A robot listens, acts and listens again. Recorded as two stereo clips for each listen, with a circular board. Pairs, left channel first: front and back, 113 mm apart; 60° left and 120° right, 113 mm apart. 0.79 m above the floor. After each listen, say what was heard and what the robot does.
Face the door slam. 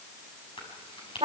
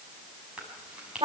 Keep listening.
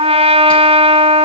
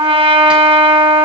Keep listening.
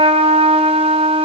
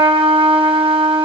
I can't make out a door slam, only a trumpet and chewing.